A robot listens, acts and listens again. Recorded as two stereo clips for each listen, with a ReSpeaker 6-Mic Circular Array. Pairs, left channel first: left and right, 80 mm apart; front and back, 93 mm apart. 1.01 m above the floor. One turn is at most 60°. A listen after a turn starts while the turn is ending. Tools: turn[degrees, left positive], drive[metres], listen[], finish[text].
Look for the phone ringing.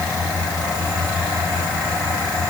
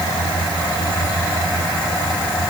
Action: listen[]
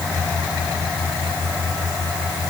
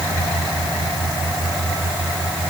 Action: listen[]
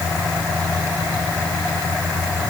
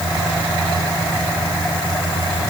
Action: finish[I can't make out a phone ringing.]